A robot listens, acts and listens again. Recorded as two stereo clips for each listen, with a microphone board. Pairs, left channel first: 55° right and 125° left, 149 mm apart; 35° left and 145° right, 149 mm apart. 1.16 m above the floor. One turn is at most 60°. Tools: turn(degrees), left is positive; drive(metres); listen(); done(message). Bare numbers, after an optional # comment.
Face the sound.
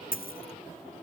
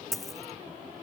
# The dropped coin: 55° right.
turn(-55)
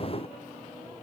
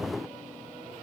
done("Facing where the dropped coin came from. I can't hear it now.")